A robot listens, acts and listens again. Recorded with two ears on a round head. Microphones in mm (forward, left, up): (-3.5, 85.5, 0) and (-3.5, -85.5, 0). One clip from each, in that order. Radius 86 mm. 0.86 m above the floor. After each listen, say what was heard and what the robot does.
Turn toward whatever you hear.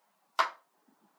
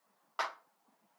The clap: about 70° left or 110° left. Turn 70° left.
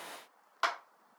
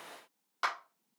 Found it: a clap, straight ahead, 1 to 2 m away.